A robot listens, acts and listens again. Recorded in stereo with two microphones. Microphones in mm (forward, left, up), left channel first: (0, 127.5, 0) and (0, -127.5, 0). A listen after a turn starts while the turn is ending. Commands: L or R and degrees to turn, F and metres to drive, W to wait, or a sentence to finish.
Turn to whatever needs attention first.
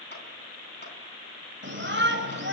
R45
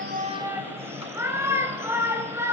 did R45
R10
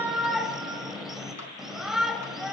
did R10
Facing the shout.